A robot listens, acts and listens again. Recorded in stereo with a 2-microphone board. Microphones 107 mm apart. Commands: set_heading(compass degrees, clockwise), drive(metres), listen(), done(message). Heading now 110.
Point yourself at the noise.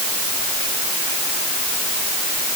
listen()
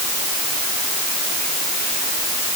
listen()
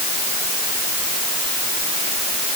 done("I can't make out anything to turn to.")